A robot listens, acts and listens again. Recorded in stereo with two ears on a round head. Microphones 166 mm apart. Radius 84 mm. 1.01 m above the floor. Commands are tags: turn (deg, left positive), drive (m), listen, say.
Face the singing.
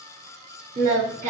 <turn deg="-40"/>
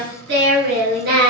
<turn deg="-120"/>
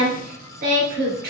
<turn deg="-55"/>
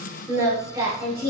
<turn deg="-20"/>
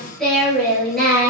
<say>Facing the singing.</say>